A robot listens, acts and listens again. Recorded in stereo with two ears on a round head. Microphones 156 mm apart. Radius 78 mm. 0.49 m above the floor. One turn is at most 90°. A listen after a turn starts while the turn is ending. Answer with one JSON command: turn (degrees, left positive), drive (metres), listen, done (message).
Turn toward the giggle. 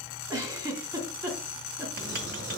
{"turn": -20}
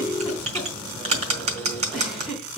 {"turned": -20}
{"done": "Facing the giggle, 2 to 4 m away."}